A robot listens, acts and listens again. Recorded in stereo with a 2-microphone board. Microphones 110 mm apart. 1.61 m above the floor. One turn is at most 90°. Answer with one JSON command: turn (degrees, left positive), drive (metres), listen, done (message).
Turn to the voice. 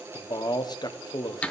{"turn": 40}
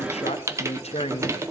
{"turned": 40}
{"turn": 90}
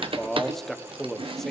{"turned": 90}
{"done": "Facing the man speaking, 1 to 2 m away."}